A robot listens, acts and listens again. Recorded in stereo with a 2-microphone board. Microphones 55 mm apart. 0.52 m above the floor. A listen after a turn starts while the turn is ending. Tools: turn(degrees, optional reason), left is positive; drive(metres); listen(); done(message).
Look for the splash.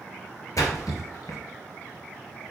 turn(degrees=90)
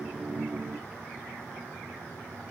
done("I heard a splash from this way, but can't make it out now.")